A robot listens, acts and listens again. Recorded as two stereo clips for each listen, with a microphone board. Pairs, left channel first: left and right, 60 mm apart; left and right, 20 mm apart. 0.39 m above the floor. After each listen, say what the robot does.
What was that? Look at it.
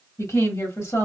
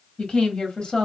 Turn 55° left.
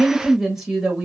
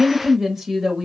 Turn 15° right.
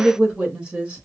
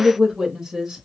Turn 25° right.
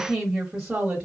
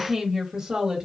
Turn 20° right.
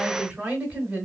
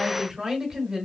Turn 15° right.
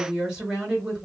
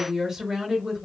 Found it: a woman speaking, straight ahead.